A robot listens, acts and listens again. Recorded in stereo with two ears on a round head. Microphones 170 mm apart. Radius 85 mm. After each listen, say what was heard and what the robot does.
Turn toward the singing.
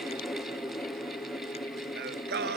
The singing: about 60° right or 120° right. Turn 60° right.
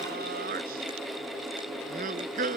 So it is at 45° right. Turn 45° right.
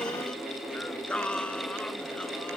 Found it: singing, straight ahead.